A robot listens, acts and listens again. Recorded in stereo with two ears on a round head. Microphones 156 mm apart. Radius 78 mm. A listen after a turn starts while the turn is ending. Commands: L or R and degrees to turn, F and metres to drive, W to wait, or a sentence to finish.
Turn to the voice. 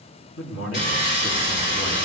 L90
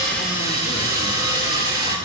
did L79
L10
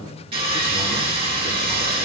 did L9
W
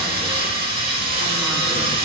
I heard a man speaking from this way, but can't make it out now.